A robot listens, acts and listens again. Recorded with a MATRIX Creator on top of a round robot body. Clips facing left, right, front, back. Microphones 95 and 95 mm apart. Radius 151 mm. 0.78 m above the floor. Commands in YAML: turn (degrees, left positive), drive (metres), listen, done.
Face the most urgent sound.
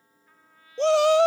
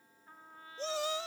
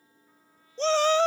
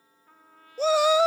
turn: 100
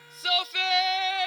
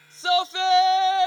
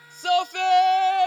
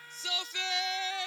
turn: -30
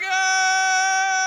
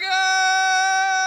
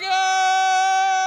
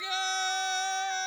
done: "Found it: a shout, straight ahead."